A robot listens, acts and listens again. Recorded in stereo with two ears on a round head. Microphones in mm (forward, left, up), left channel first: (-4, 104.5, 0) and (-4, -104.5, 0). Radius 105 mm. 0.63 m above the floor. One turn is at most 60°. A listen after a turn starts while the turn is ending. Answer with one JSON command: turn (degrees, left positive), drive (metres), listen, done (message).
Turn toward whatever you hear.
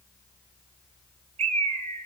{"turn": -30}
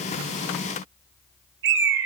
{"turn": -60}
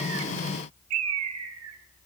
{"turn": -60}
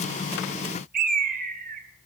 {"turn": -40}
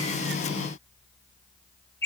{"turn": 10}
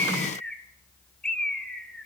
{"done": "Found it: a bird, straight ahead, 1 to 2 m away."}